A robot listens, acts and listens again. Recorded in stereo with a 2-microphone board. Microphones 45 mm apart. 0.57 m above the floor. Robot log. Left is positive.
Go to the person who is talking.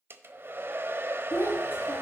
note: The child speaking: about 65° left or 115° left.
cmd yaw +65
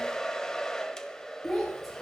cmd fwd 1.0
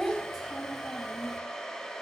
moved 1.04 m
cmd fwd 1.0
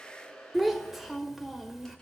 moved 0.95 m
cmd fwd 1.0
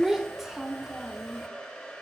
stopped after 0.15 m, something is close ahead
note: The child speaking is now 10° right.
cmd yaw -10
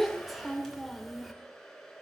end: Arrived at the child speaking, straight ahead.